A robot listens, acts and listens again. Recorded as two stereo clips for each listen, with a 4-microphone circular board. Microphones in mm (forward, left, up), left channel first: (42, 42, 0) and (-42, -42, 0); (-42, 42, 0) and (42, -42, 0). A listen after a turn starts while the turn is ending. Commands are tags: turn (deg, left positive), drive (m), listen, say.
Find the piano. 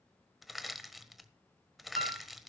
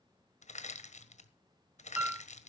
<turn deg="-120"/>
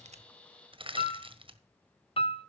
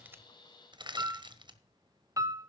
<turn deg="15"/>
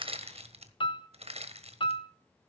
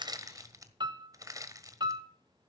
<say>Found it: a piano, straight ahead.</say>